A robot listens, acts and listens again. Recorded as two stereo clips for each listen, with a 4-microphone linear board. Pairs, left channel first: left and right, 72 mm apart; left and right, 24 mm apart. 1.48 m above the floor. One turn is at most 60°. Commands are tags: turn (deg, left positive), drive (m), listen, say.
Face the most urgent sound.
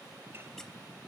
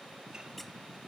<listen/>
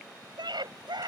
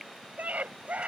<turn deg="-60"/>
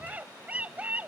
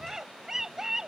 <turn deg="-20"/>
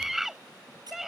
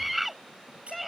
<say>Found it: a scream, straight ahead.</say>